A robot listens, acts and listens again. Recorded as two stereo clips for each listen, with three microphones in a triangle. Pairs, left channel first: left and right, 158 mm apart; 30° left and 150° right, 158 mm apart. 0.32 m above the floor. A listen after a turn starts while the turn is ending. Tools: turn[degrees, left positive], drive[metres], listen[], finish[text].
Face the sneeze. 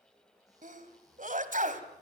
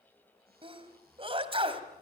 Thought: The sneeze: 100° right.
Action: turn[-100]
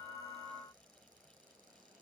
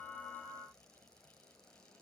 Action: finish[Facing where the sneeze came from. I can't hear it now.]